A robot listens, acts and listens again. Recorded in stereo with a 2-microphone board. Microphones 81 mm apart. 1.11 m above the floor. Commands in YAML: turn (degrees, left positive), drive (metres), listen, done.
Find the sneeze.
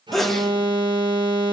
turn: 30
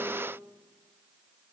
listen: true
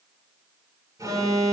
done: "I heard a sneeze, but can't make it out now. It was about 30° right or 150° left."